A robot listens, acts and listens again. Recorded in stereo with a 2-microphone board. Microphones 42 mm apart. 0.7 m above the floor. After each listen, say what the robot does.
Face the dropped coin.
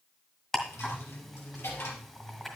Turn 90° left.
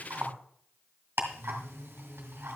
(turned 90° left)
I heard a dropped coin from this way, but can't make it out now.